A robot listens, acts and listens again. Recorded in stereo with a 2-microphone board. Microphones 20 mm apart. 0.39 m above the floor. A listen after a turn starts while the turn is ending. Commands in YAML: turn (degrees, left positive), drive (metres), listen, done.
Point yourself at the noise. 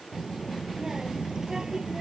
turn: -35
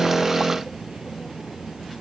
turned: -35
turn: -95
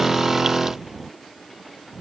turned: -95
turn: -10
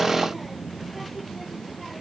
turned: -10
done: "Facing the child speaking."